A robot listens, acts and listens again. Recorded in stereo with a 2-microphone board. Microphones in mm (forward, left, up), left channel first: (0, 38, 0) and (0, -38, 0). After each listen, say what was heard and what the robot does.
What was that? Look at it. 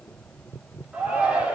Turn 30° right.
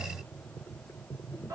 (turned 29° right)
So it is at 135° right. Turn 135° right.
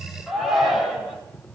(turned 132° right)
Found it: a shout, straight ahead.